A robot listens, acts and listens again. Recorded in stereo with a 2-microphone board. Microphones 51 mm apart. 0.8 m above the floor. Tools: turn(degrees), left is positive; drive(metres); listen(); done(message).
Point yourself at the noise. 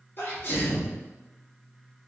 turn(degrees=40)
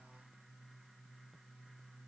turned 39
listen()
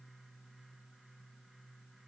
done("I heard a sneeze, but can't make it out now. It was about straight ahead or 100° left.")